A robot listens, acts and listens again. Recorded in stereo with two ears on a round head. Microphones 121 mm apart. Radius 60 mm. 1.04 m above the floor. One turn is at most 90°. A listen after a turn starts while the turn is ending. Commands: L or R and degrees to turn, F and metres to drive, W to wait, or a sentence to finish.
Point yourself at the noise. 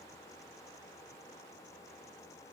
W
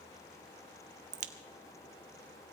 R60
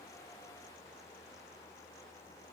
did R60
W
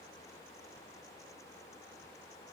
I heard a crack, but can't make it out now. It was about straight ahead or 60° right.